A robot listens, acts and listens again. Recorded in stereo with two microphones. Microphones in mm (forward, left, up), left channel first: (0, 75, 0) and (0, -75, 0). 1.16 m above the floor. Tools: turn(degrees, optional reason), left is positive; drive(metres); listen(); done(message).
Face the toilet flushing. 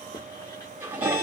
turn(degrees=-30)
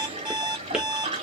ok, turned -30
turn(degrees=-140, reason="So it is at 140° right.")
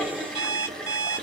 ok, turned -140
done("Facing the toilet flushing.")